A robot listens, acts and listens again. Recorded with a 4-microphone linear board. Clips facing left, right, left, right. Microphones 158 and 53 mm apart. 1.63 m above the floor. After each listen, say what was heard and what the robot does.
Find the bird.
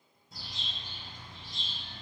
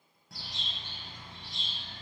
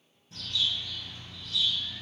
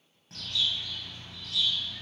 The bird: about 70° right or 110° right. Turn 70° right.
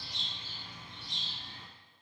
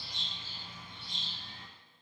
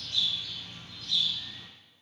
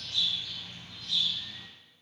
So it is at 30° right. Turn 30° right.
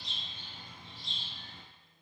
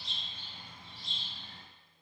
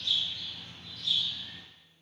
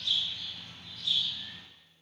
Found it: a bird, straight ahead.